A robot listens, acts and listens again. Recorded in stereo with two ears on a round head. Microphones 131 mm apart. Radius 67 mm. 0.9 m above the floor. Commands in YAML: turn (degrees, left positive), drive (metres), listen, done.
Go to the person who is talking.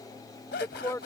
turn: 20
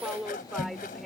drive: 1.0
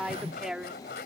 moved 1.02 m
drive: 1.0
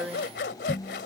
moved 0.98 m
drive: 1.0
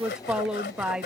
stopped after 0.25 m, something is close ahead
done: "I am next to the woman speaking."